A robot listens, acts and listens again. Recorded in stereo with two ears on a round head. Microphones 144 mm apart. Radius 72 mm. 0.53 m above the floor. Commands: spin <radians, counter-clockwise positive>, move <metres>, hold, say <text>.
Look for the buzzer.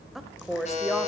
spin 0.79
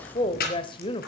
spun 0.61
hold
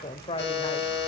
spin 1.66
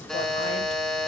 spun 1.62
say Facing the buzzer, over 4 m away.